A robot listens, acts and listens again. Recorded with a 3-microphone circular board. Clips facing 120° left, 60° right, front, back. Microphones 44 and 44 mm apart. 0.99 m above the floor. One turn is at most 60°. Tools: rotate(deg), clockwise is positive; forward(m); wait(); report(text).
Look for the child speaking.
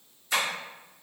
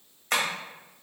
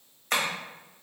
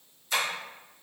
wait()
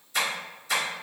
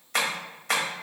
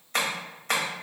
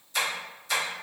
wait()
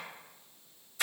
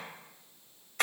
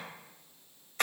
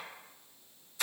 report("I can't make out a child speaking to turn to.")